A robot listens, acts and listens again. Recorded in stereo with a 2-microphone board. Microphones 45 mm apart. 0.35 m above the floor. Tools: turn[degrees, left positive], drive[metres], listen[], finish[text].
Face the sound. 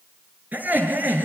Thought: The laughter: about 45° right or 135° right.
Action: turn[-45]
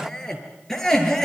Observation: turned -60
Action: finish[Found it: laughter, straight ahead, over 4 m away.]